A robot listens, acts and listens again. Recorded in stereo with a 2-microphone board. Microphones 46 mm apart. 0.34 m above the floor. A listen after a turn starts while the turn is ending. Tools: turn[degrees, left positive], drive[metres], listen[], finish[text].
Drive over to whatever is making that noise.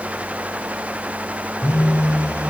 Action: turn[90]
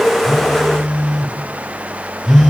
Thought: So it is at 10° left.
Action: turn[10]
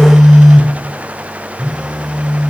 Action: drive[1.0]
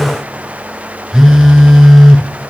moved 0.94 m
Action: drive[1.0]
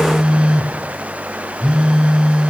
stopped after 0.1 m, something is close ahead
Thought: The phone buzzing is now 15° right.
Action: turn[-15]
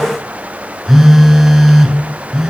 Action: finish[I am next to the phone buzzing.]